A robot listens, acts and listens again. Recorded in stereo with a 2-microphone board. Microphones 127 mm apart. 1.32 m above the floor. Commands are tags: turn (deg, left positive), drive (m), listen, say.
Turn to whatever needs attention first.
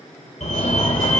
<turn deg="65"/>
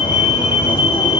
<turn deg="40"/>
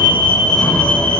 <turn deg="10"/>
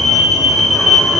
<say>Found it: a fire alarm, straight ahead.</say>